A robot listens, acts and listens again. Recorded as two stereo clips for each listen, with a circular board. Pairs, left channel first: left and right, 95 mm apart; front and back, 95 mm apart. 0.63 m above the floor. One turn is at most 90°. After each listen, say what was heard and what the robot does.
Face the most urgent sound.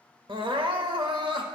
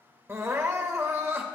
The crying: 120° right. Turn 90° right.
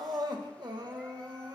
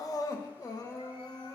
The crying is now 50° right. Turn 50° right.
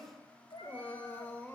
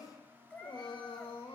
The crying is now 20° left. Turn 20° left.
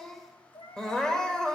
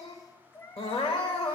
The crying is now 10° left. Turn 10° left.
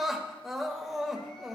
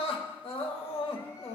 Found it: crying, straight ahead.